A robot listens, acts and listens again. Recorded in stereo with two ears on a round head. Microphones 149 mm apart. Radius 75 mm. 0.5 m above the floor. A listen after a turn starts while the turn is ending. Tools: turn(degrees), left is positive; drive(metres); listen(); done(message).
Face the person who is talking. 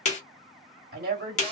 turn(degrees=-55)
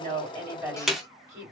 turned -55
turn(degrees=-20)
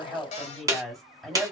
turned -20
done("Facing the woman speaking.")